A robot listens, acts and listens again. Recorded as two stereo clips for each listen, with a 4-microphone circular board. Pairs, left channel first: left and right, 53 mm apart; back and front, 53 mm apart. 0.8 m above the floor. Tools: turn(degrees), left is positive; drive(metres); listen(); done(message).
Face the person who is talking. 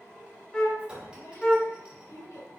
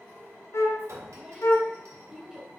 turn(degrees=75)
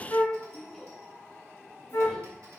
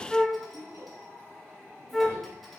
done("Found it: a child speaking, straight ahead, 2 to 4 m away.")